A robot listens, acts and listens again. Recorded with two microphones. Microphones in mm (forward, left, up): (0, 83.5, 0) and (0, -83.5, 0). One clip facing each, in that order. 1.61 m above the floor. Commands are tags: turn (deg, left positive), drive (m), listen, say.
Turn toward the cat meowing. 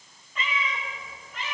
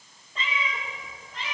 <turn deg="-35"/>
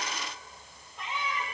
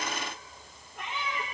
<turn deg="-110"/>
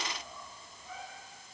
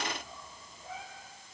<turn deg="-25"/>
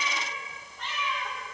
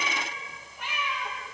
<turn deg="-10"/>
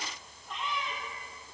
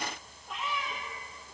<say>Facing the cat meowing.</say>